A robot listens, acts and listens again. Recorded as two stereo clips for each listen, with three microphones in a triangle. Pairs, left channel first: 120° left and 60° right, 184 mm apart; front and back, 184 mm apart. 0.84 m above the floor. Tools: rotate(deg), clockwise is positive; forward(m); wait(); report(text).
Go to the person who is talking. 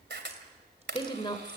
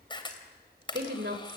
rotate(-180)
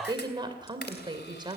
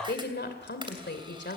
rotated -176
forward(1.0)
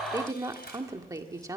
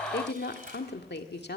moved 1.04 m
rotate(-10)
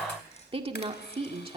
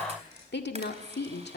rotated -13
forward(1.0)
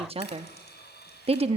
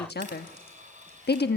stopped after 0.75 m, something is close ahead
report("Arrived at the woman speaking, straight ahead.")